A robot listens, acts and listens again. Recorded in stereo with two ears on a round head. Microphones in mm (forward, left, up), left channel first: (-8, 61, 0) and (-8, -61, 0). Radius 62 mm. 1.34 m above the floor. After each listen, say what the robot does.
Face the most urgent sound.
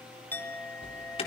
Turn 45° left.
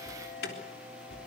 Turn 90° left.
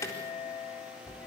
Turn 20° left.
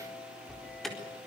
Facing the alarm.